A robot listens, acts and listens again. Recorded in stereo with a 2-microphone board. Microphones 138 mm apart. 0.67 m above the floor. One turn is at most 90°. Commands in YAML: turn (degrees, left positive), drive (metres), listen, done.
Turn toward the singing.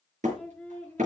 turn: 30
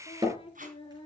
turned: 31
turn: 90
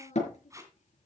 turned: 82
turn: 60
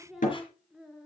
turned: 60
done: "Found it: singing, straight ahead, 2 to 4 m away."